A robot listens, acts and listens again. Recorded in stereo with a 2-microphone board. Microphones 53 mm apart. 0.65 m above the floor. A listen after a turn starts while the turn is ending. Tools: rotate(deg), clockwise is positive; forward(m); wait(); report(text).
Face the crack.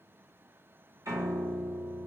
wait()
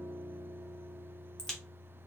rotate(-30)
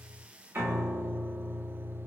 wait()
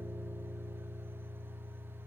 report("I heard a crack, but can't make it out now. It was about 20° right or 140° left.")